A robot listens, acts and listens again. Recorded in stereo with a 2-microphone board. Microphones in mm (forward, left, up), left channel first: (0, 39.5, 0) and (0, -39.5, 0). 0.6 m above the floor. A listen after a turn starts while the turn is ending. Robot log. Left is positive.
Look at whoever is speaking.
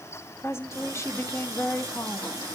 note: The woman speaking: about 35° left or 145° left.
cmd yaw +35
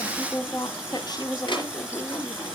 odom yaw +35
note: So it is at 105° left.
cmd yaw +105
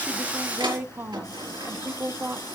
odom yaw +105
note: The woman speaking is now 30° right.
cmd yaw -30
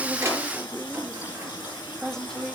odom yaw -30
end: Facing the woman speaking, 1 to 2 m away.